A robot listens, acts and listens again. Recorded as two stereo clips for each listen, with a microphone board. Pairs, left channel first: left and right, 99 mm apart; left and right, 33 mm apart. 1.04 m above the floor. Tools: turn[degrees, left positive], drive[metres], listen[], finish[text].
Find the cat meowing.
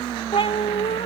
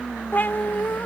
Action: turn[90]
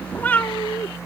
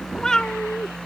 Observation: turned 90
Thought: So it is at 30° left.
Action: turn[30]
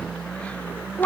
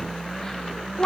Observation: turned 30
Thought: The cat meowing is now 20° left.
Action: turn[20]
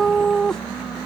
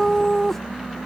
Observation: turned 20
Action: finish[Found it: a cat meowing, straight ahead.]